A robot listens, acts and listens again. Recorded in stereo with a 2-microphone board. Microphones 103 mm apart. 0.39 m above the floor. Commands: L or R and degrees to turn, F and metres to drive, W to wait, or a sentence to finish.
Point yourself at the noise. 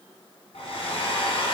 L75
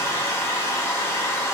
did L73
L30
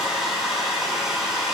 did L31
Found it: a hair dryer, straight ahead.